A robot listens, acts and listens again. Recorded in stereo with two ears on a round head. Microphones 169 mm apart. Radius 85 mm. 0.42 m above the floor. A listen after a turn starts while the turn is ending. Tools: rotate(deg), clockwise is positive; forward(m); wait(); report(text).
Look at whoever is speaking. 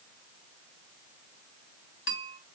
wait()
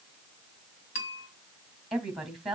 rotate(-30)
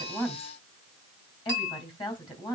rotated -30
rotate(-150)
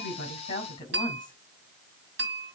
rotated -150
rotate(-25)
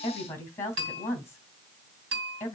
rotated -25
rotate(-15)
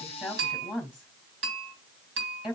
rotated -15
report("Facing the woman speaking.")